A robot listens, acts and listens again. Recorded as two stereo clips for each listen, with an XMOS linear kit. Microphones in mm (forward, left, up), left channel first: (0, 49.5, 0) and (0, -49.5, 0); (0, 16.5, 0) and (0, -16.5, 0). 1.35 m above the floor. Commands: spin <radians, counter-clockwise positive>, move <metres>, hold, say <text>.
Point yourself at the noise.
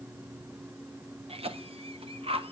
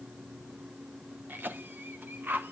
spin -1.31
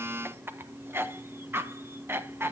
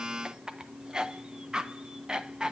spin -0.44
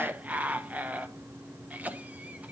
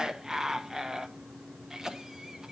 spin -0.26
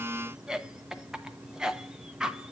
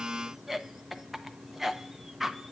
say Facing the cough.